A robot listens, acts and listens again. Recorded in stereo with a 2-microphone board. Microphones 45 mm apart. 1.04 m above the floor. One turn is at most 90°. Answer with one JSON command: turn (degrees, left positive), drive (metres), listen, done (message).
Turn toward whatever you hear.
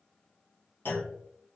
{"turn": 50}
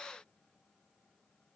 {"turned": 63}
{"listen": true}
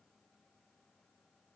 {"done": "I heard a clunk, but can't make it out now. It was about 10° right or 65° left."}